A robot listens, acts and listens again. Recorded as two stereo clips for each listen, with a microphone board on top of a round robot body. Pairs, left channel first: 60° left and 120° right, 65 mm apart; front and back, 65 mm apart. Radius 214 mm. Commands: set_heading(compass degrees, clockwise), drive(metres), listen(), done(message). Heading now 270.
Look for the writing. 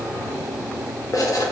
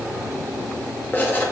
set_heading(215)
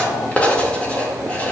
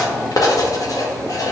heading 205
set_heading(215)
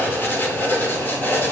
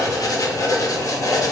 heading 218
done("Found it: writing, straight ahead.")